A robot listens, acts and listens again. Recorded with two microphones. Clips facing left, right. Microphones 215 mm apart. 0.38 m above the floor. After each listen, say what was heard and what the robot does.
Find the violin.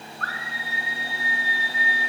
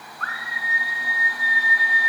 Keep listening.
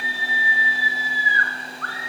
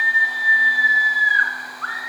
Keep listening.
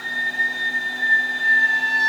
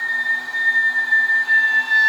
I can't make out a violin to turn to.